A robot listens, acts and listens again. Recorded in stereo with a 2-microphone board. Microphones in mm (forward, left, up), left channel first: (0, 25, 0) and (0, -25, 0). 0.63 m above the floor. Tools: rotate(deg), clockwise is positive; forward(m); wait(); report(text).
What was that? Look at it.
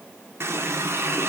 rotate(55)
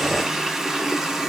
rotate(10)
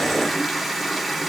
report("Found it: a running tap, straight ahead, 1 to 2 m away.")